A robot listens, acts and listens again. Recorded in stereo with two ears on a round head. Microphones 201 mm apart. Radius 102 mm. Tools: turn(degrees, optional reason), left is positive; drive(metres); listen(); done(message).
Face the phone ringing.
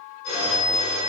turn(degrees=90)
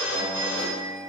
turn(degrees=-10, reason="So it is at 10° right.")
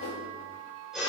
done("Facing the phone ringing.")